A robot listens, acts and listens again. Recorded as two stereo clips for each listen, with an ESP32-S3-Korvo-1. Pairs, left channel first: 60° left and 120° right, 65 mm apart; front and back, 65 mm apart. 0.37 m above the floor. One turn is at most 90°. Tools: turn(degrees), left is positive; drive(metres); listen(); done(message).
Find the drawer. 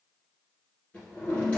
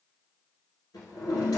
turn(degrees=-10)
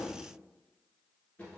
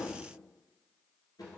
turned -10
done("Facing the drawer, 1 to 2 m away.")